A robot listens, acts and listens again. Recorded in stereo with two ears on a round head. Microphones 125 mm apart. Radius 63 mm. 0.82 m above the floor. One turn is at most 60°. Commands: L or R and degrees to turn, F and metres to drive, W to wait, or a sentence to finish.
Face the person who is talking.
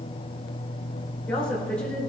L30
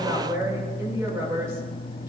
R20
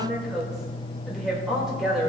Facing the woman speaking, 2 to 4 m away.